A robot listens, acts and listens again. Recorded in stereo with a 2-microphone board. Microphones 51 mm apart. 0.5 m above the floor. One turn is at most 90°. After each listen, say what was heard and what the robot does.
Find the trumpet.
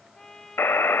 Turn 30° left.
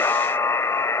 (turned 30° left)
Keep listening.
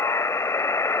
Keep listening.
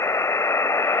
I heard a trumpet, but can't make it out now. It was about 20° right or 140° left.